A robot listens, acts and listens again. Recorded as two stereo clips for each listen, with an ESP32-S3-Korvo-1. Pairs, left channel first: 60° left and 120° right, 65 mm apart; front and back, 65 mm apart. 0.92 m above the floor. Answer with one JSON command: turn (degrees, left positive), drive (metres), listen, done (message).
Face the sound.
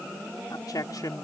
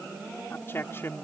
{"turn": 50}
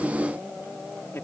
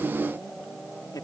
{"turn": 10}
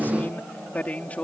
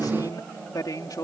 {"turn": -10}
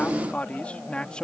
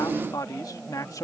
{"turn": -15}
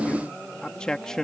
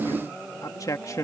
{"turn": -20}
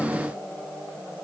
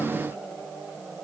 {"listen": true}
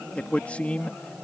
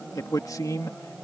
{"turn": -10}
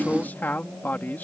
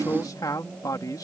{"done": "Facing the man speaking."}